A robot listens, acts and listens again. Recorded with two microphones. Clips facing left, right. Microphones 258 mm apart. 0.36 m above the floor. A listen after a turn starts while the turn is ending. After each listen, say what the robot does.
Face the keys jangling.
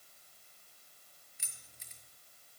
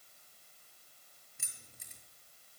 Turn 55° right.
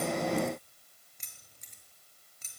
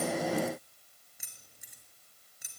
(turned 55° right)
Turn 10° right.
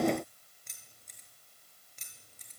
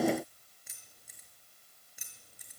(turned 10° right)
Turn 10° right.
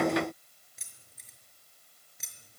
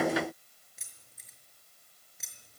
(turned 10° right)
Facing the keys jangling.